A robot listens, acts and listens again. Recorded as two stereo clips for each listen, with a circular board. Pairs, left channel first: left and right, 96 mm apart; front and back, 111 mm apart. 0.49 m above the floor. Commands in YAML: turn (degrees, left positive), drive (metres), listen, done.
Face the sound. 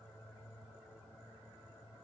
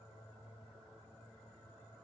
listen: true
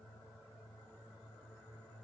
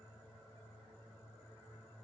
listen: true
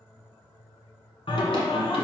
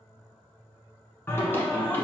turn: 75
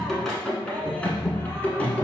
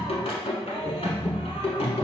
turn: 15
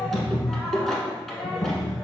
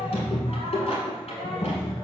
done: "Facing the singing, 1 to 2 m away."